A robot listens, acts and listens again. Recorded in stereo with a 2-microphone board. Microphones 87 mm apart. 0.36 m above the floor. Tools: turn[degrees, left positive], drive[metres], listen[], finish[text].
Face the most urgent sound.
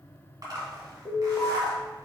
Thought: The alarm: about 40° left or 140° left.
Action: turn[40]
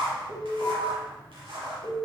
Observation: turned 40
Thought: So it is at 95° left.
Action: turn[95]
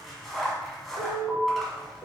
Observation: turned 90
Action: finish[Found it: an alarm, straight ahead, 1 to 2 m away.]